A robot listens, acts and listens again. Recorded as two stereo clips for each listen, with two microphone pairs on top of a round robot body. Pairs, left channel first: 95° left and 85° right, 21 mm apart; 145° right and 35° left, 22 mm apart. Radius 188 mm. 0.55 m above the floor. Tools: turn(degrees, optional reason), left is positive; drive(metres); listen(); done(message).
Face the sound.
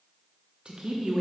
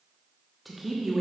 turn(degrees=-55, reason="The man speaking: 55° right.")
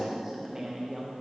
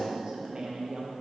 turn(degrees=-20, reason="The man speaking is now 20° right.")
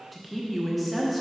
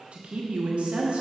done("Found it: a man speaking, straight ahead, 1 to 2 m away.")